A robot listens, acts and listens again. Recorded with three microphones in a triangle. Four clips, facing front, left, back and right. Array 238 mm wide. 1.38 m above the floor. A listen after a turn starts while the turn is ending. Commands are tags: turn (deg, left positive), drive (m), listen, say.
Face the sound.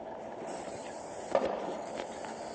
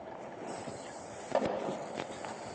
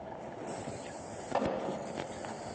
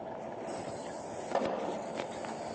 <say>Facing the pop.</say>